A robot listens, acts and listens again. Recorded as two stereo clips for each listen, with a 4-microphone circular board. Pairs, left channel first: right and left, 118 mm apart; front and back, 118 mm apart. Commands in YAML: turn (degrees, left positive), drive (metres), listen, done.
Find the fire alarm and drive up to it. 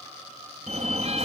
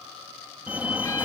turn: 105
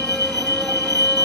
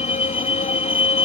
turn: 35
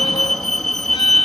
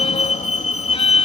drive: 1.0
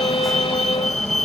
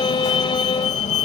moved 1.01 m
drive: 1.0
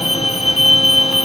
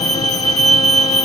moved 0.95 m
drive: 1.0
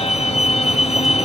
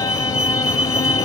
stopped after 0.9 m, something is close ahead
done: "Arrived at the fire alarm, straight ahead."